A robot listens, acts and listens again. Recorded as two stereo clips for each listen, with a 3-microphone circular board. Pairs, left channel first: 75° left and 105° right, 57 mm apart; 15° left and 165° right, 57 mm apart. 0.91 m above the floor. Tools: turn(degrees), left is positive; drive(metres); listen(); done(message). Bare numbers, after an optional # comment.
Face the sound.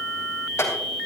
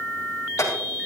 # The clink: 40° left.
turn(40)
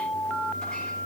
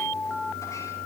listen()
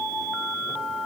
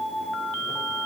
listen()
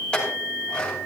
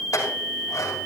done("Found it: a clink, straight ahead.")